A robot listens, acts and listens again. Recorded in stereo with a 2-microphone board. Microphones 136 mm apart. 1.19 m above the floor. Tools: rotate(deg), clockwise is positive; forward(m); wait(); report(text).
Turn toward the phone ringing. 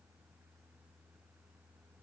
wait()
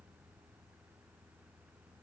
wait()
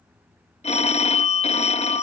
rotate(-55)
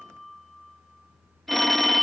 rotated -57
report("Found it: a phone ringing, straight ahead.")